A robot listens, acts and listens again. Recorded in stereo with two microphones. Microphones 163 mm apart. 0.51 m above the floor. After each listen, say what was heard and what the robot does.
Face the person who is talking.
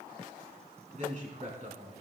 The man speaking: about 50° right or 130° right. Turn 50° right.
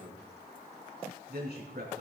So it is at 80° right. Turn 80° right.
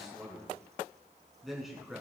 Facing the man speaking, over 4 m away.